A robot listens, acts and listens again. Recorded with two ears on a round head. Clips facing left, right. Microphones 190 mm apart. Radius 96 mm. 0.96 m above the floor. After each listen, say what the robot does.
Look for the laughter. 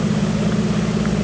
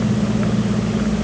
Keep listening.
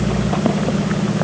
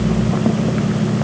Keep listening.
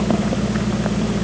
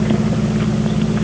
I can't make out laughter to turn to.